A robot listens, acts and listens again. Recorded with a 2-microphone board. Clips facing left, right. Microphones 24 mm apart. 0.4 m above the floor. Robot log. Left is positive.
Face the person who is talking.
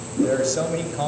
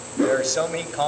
note: The man speaking: about 25° right or 155° right.
cmd yaw -25
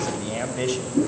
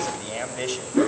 end: Found it: a man speaking, straight ahead.